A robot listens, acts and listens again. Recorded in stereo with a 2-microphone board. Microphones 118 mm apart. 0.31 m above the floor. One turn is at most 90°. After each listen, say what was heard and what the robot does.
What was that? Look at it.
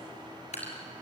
The dripping: about 65° left or 115° left. Turn 65° left.
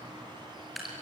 Facing the dripping.